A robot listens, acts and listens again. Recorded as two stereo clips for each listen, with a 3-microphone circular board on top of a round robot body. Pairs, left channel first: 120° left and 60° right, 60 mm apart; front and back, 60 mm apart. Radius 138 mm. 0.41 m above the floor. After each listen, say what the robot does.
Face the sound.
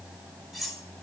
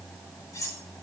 Turn 30° left.
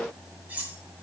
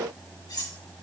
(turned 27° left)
Facing the cutlery clinking.